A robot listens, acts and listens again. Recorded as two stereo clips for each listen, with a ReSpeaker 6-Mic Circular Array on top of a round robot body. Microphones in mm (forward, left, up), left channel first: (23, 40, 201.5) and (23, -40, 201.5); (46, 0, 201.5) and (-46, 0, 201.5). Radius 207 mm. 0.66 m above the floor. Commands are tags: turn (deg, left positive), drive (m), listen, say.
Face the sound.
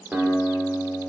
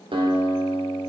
<turn deg="-160"/>
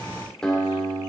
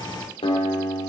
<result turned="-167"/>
<turn deg="10"/>
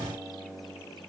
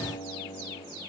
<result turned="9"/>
<say>Facing the guitar, 2 to 4 m away.</say>